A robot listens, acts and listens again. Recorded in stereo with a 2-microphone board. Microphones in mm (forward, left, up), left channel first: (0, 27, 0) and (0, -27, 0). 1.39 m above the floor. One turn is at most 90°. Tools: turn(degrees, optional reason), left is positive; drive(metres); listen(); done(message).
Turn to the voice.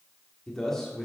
turn(degrees=30)
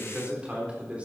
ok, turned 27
turn(degrees=-25, reason="So it is at 25° right.")
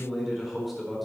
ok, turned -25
done("Found it: a man speaking, straight ahead, over 4 m away.")